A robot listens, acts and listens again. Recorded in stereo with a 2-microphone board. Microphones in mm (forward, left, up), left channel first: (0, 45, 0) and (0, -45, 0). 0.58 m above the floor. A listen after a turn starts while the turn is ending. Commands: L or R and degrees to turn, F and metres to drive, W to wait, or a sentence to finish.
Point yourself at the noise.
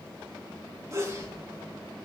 R35
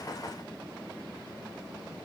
W
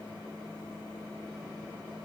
I heard a sneeze, but can't make it out now. It was about straight ahead or 110° right.